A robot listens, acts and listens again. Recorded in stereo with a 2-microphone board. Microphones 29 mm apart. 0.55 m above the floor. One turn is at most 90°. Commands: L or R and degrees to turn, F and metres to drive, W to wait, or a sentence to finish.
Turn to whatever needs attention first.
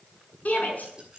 L60
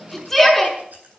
Facing the shout, over 4 m away.